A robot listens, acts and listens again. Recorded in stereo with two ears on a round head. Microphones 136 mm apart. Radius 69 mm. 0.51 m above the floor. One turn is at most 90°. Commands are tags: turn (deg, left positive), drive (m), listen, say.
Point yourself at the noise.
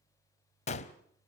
<turn deg="45"/>
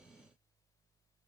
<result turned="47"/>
<listen/>
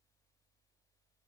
<say>I heard a gunshot, but can't make it out now. It was about straight ahead or 85° left.</say>